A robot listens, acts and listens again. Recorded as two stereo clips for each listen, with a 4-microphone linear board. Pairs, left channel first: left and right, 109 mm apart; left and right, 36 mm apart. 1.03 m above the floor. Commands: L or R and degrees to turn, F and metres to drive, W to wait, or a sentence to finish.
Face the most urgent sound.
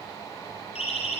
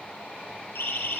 L90
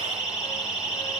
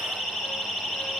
R10
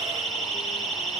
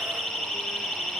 Found it: a siren, straight ahead, over 4 m away.